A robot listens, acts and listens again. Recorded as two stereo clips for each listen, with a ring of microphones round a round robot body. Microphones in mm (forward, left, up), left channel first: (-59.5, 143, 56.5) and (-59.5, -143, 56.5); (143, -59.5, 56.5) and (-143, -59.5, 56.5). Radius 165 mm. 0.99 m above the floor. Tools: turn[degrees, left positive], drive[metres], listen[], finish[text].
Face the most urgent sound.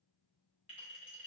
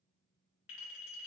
Action: listen[]
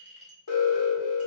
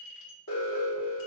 Thought: The alarm: 50° left.
Action: turn[50]
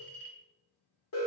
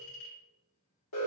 Thought: The alarm is now 40° left.
Action: turn[40]
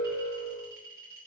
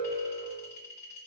Action: finish[Facing the alarm.]